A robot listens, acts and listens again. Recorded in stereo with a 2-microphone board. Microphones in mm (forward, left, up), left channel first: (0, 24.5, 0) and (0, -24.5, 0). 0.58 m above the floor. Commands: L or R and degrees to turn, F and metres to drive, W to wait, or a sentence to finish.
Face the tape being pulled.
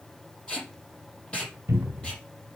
L20
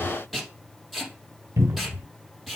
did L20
Facing the tape being pulled.